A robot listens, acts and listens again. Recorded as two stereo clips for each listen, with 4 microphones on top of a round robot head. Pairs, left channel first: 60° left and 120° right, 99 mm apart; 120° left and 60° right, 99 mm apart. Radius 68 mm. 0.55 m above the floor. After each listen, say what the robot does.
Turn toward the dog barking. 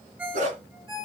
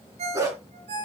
Turn 120° right.
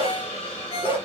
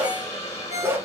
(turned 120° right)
Turn 10° left.
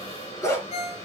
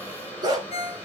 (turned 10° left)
Found it: a dog barking, straight ahead, 2 to 4 m away.